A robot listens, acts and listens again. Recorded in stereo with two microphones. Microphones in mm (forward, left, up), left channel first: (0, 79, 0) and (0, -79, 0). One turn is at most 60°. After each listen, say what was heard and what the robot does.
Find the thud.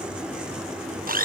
Keep listening.
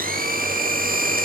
Keep listening.
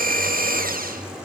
I can't make out a thud to turn to.